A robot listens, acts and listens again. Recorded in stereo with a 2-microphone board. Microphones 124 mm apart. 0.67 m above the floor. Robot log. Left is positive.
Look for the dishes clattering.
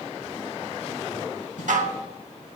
cmd yaw -90
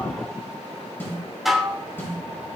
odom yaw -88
end: Found it: dishes clattering, straight ahead, 1 to 2 m away.